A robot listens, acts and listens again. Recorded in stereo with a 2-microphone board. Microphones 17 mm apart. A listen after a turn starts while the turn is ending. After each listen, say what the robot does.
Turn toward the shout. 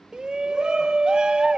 Turn 60° right.
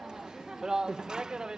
Turn 50° right.
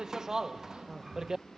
Turn 30° right.
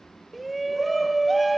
Found it: a shout, straight ahead.